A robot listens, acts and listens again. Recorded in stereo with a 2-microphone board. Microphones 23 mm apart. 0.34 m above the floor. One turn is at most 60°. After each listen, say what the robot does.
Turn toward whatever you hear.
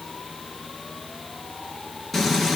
Turn 20° left.
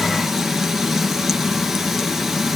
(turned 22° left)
Facing the frying.